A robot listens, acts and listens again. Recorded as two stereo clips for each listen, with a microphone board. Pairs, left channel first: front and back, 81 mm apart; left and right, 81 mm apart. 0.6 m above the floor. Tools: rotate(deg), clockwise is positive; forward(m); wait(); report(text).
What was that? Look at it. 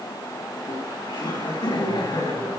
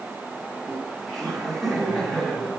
report("Found it: laughter, straight ahead, over 4 m away.")